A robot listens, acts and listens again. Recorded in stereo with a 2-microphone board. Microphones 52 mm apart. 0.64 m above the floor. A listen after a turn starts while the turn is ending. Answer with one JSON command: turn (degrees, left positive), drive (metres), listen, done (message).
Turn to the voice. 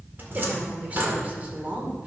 {"turn": -30}
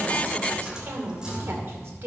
{"turn": -115}
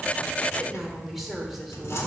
{"done": "Facing the woman speaking."}